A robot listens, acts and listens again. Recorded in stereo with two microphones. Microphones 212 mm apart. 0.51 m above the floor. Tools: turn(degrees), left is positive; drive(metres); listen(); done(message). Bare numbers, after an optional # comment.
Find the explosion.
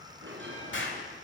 # The explosion: about 65° left or 115° left.
turn(65)
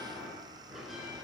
listen()
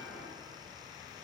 done("I heard an explosion, but can't make it out now. It was about straight ahead or 50° left.")